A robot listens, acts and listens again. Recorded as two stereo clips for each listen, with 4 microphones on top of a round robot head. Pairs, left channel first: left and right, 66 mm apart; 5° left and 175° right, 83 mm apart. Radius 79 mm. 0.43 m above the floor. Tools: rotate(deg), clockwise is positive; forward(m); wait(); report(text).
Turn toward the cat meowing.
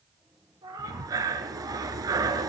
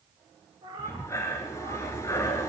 rotate(130)
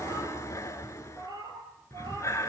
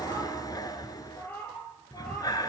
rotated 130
rotate(70)
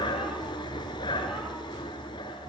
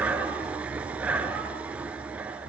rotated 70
wait()
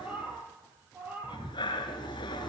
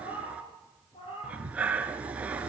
rotate(20)
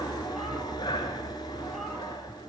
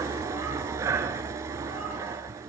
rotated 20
wait()
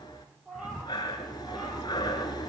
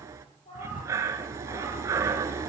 report("Found it: a cat meowing, straight ahead.")